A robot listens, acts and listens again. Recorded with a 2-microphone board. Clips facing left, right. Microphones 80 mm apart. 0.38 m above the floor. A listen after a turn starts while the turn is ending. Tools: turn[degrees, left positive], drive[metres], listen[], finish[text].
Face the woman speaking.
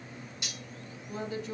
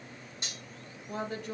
Thought: The woman speaking: about 60° right or 120° right.
Action: turn[-60]
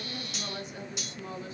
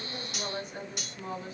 Thought: So it is at 50° right.
Action: turn[-50]
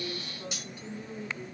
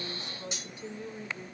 Thought: The woman speaking is now 25° right.
Action: turn[-25]
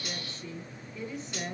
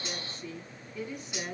Thought: The woman speaking is now 10° right.
Action: turn[-10]
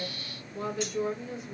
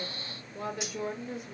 Action: finish[Found it: a woman speaking, straight ahead, 2 to 4 m away.]